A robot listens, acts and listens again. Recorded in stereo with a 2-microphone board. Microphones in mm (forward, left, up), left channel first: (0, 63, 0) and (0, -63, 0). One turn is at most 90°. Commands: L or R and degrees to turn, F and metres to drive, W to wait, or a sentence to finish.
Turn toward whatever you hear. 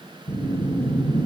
L45
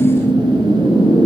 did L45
L90
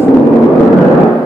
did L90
Facing the whoosh.